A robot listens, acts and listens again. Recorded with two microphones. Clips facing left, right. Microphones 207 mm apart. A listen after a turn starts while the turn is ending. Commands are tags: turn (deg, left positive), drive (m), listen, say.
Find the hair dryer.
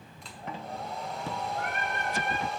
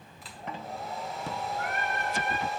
<turn deg="-30"/>
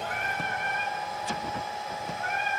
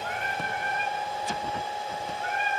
<turn deg="-150"/>
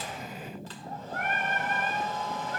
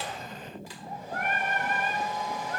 <turn deg="-15"/>
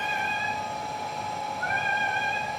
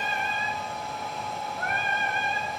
<say>Found it: a hair dryer, straight ahead, 1 to 2 m away.</say>